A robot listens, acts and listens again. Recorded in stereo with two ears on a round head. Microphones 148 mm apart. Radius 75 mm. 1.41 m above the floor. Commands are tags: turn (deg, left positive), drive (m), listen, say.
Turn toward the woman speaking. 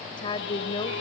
<turn deg="30"/>
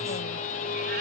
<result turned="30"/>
<listen/>
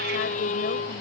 <listen/>
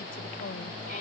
<say>I heard a woman speaking, but can't make it out now. It was about straight ahead or 120° left.</say>